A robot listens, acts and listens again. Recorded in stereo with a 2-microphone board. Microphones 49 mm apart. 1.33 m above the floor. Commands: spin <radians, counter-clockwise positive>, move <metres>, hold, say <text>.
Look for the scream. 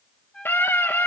spin 0.79
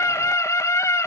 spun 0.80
spin 1.48
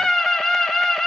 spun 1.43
say Found it: a scream, straight ahead, 1 to 2 m away.